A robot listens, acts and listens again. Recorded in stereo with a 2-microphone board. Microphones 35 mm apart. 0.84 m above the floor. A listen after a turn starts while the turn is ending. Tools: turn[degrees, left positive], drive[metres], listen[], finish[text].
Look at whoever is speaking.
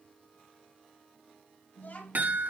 Thought: The child speaking: about 60° left or 120° left.
Action: turn[60]
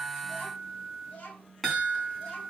Thought: So it is at 40° left.
Action: turn[40]
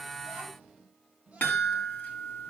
Thought: The child speaking is now 30° right.
Action: turn[-30]
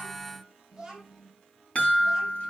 Thought: The child speaking is now 10° right.
Action: turn[-10]
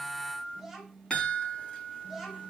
Action: finish[Found it: a child speaking, straight ahead, 2 to 4 m away.]